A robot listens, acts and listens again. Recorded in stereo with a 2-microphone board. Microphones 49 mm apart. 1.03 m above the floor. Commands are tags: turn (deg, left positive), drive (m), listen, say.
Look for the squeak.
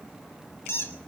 <turn deg="65"/>
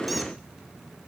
<listen/>
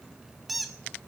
<say>Found it: a squeak, straight ahead.</say>